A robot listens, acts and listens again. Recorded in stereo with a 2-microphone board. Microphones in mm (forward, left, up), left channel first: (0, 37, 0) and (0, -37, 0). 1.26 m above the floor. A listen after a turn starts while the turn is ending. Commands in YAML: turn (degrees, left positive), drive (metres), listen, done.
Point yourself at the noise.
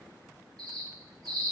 turn: -65
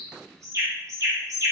turn: -45
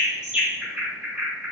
turn: -15
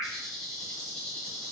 done: "Facing the bird, under 1 m away."